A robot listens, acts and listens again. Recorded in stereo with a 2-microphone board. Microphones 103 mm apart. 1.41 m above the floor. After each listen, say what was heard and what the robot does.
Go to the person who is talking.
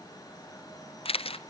Keep listening.
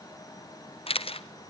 Keep listening.
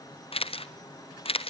I can't make out anyone speaking, only a camera shutter.